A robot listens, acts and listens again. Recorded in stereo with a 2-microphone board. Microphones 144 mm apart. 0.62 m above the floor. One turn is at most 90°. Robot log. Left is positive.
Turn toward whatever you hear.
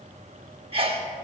note: The sneeze: about 40° right or 140° right.
cmd yaw -40
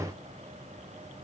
cmd idle
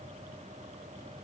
end: I heard a sneeze, but can't make it out now. It was about straight ahead or 100° right.